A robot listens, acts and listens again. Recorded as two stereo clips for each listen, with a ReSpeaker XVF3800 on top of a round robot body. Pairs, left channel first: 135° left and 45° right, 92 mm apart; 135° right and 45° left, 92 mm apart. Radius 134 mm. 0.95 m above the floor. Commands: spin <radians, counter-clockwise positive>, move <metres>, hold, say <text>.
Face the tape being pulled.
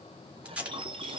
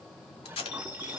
spin -2.09
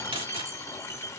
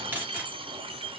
spin -0.44
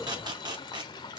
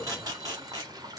say Facing the tape being pulled, 2 to 4 m away.